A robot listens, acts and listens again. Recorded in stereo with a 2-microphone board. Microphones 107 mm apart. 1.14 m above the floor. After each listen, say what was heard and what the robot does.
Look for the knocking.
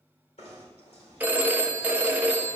Turn 90° left.
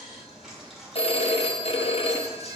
Facing the knocking.